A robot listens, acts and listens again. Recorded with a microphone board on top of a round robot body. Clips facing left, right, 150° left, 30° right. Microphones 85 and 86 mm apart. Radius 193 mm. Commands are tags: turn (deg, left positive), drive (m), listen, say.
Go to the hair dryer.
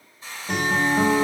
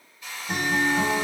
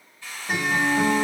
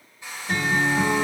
<turn deg="35"/>
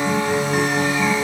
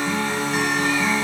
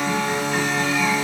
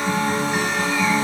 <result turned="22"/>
<turn deg="15"/>
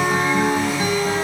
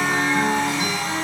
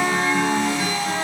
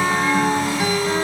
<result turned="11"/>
<listen/>
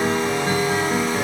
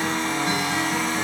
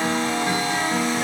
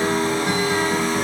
<say>Facing where the hair dryer came from. I can't hear it now. I did not reach it.</say>